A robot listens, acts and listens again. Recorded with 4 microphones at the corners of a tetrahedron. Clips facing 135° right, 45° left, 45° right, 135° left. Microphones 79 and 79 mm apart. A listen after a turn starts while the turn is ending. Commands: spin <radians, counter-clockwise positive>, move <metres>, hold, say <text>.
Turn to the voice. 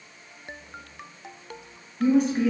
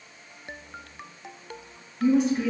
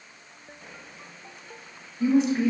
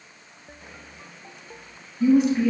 spin -1.83
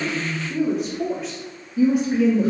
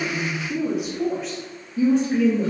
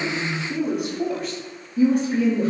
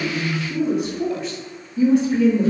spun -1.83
spin -1.13
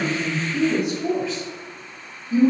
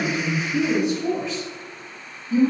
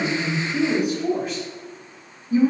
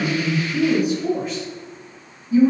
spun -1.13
spin -0.44
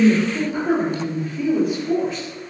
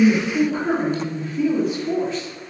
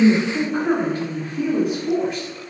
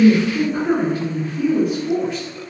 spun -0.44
say Found it: a woman speaking, straight ahead, 1 to 2 m away.